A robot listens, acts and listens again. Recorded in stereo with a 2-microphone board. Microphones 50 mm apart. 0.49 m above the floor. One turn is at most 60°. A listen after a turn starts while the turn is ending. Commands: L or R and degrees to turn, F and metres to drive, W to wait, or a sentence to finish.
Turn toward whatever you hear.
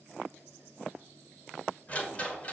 L30
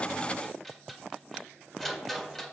Facing the rattle.